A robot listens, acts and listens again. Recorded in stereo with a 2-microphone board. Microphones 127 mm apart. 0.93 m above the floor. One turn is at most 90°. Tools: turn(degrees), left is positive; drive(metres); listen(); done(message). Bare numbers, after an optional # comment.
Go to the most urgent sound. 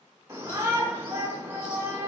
# The shout: about 25° right or 155° right.
turn(-25)
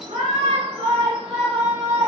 # So it is at 130° right.
turn(-90)
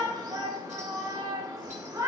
# The shout is now 30° right.
turn(-30)
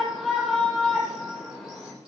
drive(1.0)
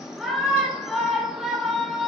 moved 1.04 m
drive(1.0)
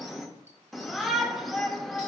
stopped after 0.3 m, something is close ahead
done("I am next to the shout.")